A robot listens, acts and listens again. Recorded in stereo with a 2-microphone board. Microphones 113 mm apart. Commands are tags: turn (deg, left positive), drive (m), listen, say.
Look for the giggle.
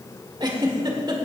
<turn deg="-40"/>
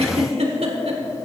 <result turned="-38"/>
<turn deg="-100"/>
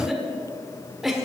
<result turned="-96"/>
<say>Found it: a giggle, straight ahead.</say>